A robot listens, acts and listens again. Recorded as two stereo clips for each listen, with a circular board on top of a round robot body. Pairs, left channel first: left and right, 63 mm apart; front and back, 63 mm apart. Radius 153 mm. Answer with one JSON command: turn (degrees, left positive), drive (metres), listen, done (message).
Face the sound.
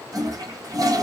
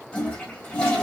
{"turn": -70}
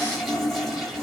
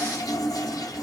{"done": "Found it: a toilet flushing, straight ahead, 2 to 4 m away."}